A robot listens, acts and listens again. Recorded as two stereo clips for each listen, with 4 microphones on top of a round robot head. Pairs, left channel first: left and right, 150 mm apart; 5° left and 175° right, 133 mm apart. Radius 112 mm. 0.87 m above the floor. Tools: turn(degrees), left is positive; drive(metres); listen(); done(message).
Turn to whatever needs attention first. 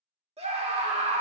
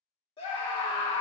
turn(degrees=-40)
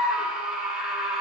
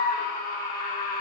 done("Facing the scream, 2 to 4 m away.")